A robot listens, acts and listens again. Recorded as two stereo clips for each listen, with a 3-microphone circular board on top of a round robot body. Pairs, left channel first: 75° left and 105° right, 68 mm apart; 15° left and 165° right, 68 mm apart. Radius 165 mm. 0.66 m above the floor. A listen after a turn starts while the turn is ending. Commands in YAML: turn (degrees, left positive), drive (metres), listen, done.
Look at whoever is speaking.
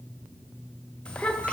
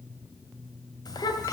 done: "Found it: a child speaking, straight ahead, 1 to 2 m away."